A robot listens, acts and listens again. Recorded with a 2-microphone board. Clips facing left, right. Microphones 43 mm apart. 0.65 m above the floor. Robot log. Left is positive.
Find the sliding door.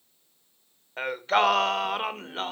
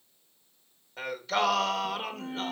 cmd idle
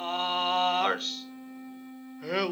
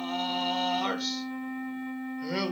cmd idle
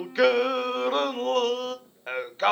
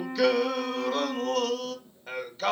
note: The sliding door: about 25° left or 155° left.
cmd yaw +25
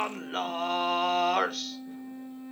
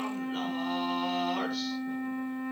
cmd idle
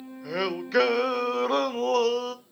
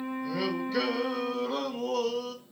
end: Facing the sliding door.